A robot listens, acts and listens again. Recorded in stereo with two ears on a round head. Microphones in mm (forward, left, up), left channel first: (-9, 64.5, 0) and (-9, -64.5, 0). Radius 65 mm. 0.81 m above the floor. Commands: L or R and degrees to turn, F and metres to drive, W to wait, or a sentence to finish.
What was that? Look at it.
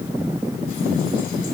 W
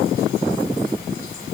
W
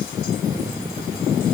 I can't make out anything.